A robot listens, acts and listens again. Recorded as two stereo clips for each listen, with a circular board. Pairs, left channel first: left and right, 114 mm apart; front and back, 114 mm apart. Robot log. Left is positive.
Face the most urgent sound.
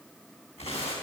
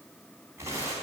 cmd idle
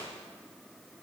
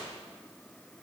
cmd idle
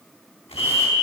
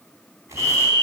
note: The fire alarm: 45° left.
cmd yaw +45
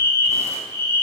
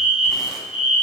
note: The fire alarm is now 20° left.
cmd yaw +20
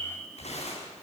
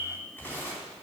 cmd idle
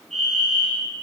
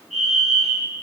end: Facing the fire alarm.